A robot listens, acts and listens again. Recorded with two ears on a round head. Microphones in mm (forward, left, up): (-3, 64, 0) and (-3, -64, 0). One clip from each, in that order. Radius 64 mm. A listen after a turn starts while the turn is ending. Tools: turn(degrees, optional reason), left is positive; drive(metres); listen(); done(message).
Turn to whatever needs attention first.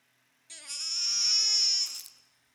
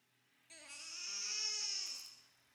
turn(degrees=90)
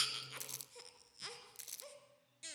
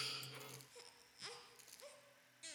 turn(degrees=10, reason="So it is at 10° left.")
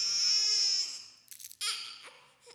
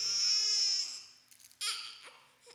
done("Found it: a baby crying, straight ahead, 2 to 4 m away.")